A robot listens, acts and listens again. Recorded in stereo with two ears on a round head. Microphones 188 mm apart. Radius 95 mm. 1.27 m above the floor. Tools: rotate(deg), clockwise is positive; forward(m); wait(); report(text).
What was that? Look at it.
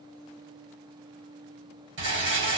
rotate(60)
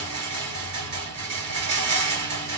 rotate(55)
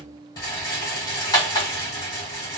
rotate(-20)
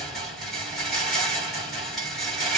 report("Found it: a rattle, straight ahead, 1 to 2 m away.")